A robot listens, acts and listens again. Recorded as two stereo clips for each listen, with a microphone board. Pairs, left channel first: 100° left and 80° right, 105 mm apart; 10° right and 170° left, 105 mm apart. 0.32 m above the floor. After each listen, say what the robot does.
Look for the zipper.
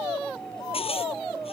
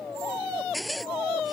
Turn 80° left.
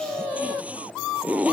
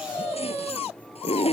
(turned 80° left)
Facing the zipper.